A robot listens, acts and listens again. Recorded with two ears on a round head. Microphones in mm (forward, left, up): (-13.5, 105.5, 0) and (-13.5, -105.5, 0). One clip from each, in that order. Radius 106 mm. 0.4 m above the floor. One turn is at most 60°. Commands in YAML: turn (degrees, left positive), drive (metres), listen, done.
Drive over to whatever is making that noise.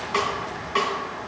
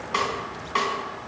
turn: -30
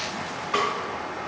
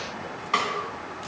turn: -60
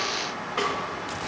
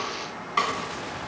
turn: -60
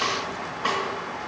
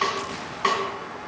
turn: -60
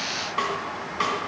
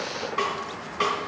turn: 10
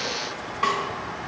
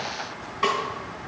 drive: 1.0
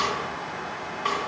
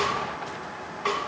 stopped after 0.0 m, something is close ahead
done: "Blocked. The snare drum is further on, straight ahead."